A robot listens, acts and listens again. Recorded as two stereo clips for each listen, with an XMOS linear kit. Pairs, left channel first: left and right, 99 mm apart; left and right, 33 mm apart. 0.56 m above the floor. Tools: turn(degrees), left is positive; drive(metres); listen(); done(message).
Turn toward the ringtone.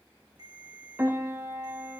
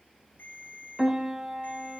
turn(degrees=90)
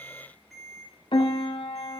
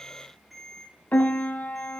done("Facing the ringtone, over 4 m away.")